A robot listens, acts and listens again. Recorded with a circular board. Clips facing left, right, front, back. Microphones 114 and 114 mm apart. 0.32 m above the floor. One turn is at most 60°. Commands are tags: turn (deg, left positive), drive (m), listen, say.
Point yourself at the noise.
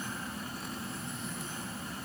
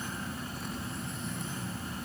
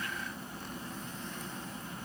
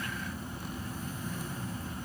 <listen/>
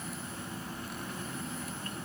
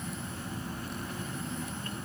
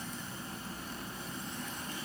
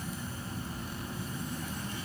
<listen/>
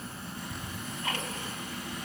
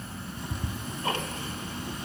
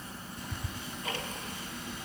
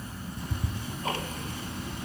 <turn deg="-60"/>
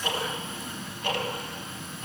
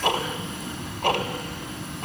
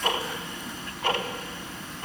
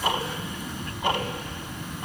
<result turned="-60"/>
<turn deg="-60"/>
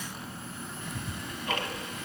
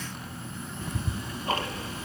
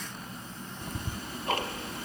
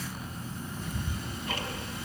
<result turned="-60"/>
<turn deg="-35"/>
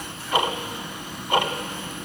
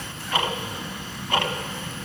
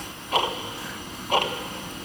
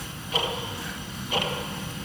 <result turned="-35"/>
<turn deg="15"/>
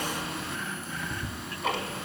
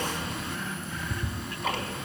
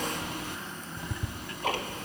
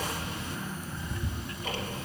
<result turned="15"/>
<say>Facing the ticking, under 1 m away.</say>